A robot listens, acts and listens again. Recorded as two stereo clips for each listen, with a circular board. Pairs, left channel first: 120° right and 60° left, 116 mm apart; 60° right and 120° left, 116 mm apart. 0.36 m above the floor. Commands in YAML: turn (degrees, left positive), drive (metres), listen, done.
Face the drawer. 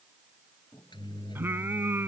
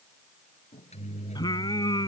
listen: true
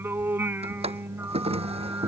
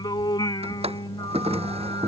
turn: 90
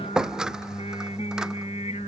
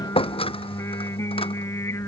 turn: -25
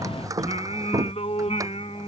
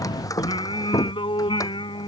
done: "Found it: a drawer, straight ahead."